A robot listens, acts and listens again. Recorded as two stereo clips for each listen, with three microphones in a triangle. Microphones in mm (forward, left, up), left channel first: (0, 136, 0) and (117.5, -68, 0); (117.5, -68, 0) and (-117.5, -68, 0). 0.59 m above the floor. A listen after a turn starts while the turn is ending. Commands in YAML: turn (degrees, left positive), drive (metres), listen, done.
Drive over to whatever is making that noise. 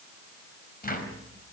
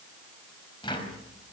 turn: 70
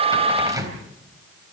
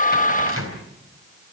turn: 15
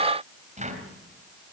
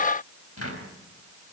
drive: 1.0
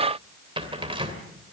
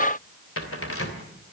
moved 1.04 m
drive: 1.0
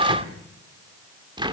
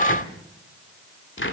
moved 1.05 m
drive: 1.0
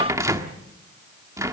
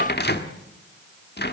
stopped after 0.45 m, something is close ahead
turn: 10
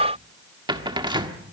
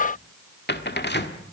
done: "I am next to the cupboard door."